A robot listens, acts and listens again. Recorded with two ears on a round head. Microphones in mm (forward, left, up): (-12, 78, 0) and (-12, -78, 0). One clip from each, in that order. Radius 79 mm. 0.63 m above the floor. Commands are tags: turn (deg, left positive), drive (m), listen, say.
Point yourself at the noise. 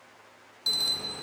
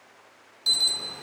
<turn deg="-30"/>
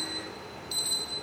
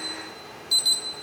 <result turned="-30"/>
<turn deg="-150"/>
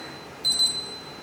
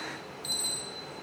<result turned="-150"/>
<turn deg="20"/>
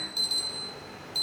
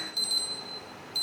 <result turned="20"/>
<say>Facing the alarm, 1 to 2 m away.</say>